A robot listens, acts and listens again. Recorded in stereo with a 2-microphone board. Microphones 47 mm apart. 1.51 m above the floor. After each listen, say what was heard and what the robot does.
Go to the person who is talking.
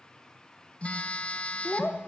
The child speaking: about 40° left or 140° left. Turn 40° left.
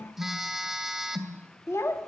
So it is at 100° left. Turn 100° left.
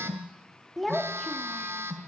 Drive 1.0 m forward.
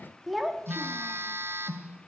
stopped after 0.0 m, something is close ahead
Something is in my way. I am facing the child speaking but have not reached it.